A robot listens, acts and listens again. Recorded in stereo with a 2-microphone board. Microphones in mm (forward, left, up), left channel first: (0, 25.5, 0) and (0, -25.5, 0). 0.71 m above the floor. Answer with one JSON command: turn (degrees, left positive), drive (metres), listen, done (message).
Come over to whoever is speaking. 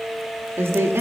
{"turn": -50}
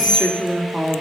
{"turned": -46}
{"drive": 1.0}
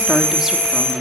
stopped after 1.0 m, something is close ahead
{"listen": true}
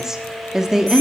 {"turn": -10}
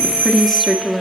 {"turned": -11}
{"done": "Arrived at the woman speaking, straight ahead."}